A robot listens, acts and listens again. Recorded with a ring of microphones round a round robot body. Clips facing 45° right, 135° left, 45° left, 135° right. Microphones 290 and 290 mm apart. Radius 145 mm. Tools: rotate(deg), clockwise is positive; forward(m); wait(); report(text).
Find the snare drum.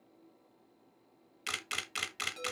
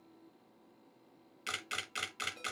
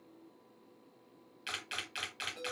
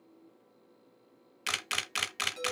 wait()
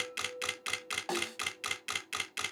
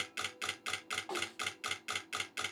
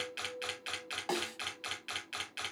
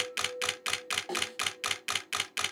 rotate(25)
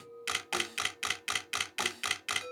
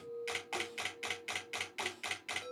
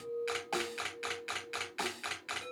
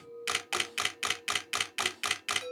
wait()
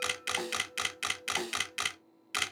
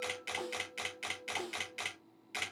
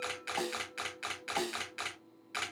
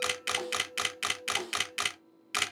report("Facing the snare drum.")